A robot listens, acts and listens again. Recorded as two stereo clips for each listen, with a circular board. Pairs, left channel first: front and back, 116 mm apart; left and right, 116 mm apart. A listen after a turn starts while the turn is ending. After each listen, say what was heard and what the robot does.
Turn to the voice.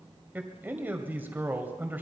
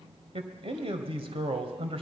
The man speaking: 110° right. Turn 110° right.
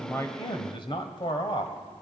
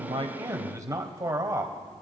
The man speaking is now 35° right. Turn 35° right.
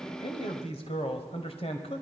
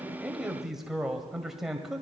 Facing the man speaking, 1 to 2 m away.